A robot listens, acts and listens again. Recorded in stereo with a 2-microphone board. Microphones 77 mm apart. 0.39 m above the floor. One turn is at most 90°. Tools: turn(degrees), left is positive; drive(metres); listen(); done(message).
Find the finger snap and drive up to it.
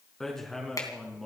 turn(degrees=45)
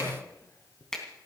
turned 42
drive(metres=1.0)
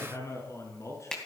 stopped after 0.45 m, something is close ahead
turn(degrees=10)
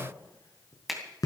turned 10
done("Blocked. The finger snap is further on, straight ahead.")